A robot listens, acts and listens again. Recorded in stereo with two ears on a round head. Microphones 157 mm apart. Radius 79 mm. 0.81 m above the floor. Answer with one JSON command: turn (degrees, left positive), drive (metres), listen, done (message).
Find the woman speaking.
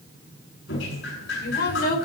{"turn": 60}
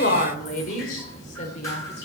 {"turn": 40}
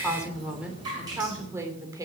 {"turn": -20}
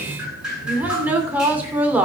{"turn": -10}
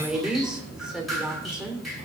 {"done": "Facing the woman speaking."}